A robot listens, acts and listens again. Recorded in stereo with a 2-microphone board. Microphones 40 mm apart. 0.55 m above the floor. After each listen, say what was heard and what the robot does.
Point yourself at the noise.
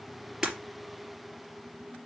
Turn 30° right.
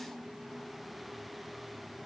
Keep listening.
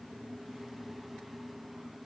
I heard breaking glass, but can't make it out now. It was about 15° left or 135° right.